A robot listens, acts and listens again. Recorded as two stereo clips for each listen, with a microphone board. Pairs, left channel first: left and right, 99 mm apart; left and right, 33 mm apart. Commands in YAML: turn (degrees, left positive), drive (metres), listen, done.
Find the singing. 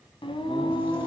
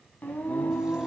turn: 60
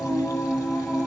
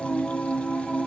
done: "Facing the singing."